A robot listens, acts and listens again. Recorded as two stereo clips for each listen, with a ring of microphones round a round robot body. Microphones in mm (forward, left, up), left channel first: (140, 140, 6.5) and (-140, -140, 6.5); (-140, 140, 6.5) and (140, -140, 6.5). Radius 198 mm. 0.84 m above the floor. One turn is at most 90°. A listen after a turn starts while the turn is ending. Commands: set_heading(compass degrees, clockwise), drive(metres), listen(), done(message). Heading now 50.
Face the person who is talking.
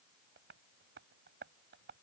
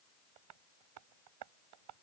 listen()
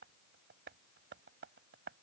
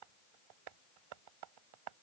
listen()
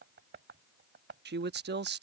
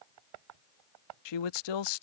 set_heading(320)
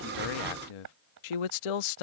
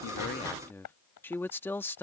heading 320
set_heading(270)
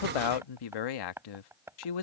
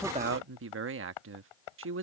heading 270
set_heading(255)
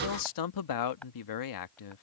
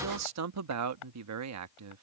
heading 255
done("Facing the man speaking.")